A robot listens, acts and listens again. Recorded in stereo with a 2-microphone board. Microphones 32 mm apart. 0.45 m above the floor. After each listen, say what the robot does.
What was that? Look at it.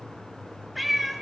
Turn 30° left.
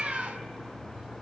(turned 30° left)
Turn 30° right.
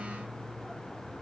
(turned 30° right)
Keep listening.
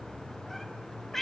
Turn 15° left.
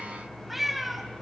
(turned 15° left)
Found it: a cat meowing, straight ahead, 1 to 2 m away.